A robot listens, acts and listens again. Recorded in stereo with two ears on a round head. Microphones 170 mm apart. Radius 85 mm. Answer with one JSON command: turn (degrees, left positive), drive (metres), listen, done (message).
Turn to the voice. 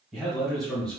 {"turn": 30}
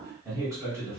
{"turn": -15}
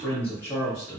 {"turn": 20}
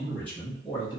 {"turn": 20}
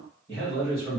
{"turn": 20}
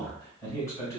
{"turn": 15}
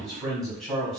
{"done": "Facing the man speaking, 1 to 2 m away."}